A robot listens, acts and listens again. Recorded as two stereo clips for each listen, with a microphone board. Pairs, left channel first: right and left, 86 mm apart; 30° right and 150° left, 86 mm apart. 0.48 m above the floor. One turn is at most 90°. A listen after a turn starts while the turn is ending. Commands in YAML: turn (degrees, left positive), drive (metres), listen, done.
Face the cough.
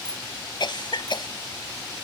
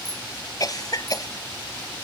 turn: -70
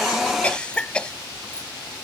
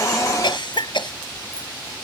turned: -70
turn: -10
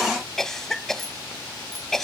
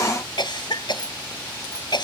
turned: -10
done: "Facing the cough."